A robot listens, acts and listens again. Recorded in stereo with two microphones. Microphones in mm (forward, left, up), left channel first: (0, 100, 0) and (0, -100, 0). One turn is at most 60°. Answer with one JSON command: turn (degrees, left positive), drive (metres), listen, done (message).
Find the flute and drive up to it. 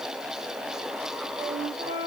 {"turn": -50}
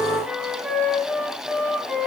{"drive": 1.0}
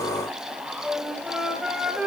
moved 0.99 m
{"drive": 1.0}
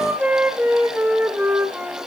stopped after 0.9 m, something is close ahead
{"turn": -10}
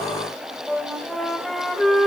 {"done": "Arrived at the flute, straight ahead."}